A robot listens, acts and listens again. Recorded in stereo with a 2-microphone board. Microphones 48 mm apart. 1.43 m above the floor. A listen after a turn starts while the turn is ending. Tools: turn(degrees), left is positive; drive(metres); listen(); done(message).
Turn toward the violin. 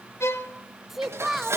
turn(degrees=90)
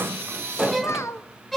done("Found it: a violin, straight ahead.")